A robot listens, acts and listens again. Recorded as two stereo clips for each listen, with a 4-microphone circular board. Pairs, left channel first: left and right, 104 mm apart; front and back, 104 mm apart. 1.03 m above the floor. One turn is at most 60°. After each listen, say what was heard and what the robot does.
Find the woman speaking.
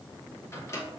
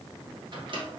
Keep listening.
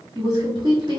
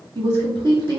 The woman speaking: 135° right. Turn 60° right.
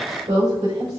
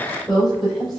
The woman speaking is now 90° right. Turn 60° right.
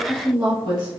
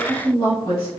The woman speaking is now 45° right. Turn 45° right.
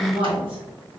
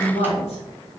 The woman speaking is now 15° right. Turn 15° right.
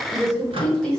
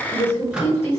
Found it: a woman speaking, straight ahead.